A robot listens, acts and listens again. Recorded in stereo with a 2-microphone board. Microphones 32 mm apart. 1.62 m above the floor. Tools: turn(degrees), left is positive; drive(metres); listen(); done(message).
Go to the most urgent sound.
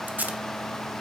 listen()
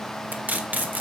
listen()
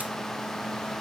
done("I can't make out anything urgent to turn to.")